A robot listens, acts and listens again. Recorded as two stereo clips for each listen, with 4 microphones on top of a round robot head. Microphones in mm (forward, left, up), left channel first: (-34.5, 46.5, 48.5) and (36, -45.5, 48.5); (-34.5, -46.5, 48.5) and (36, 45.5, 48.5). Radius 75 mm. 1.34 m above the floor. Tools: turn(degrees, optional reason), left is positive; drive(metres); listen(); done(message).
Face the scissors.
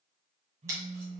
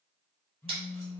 turn(degrees=10, reason="The scissors: 10° left.")
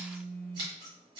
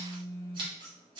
done("Facing the scissors.")